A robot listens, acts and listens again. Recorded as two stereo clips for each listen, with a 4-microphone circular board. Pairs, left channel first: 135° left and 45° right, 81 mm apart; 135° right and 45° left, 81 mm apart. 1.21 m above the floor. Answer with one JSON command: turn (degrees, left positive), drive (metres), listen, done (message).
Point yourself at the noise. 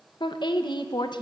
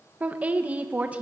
{"turn": 115}
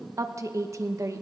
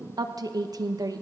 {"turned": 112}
{"done": "Facing the woman speaking, under 1 m away."}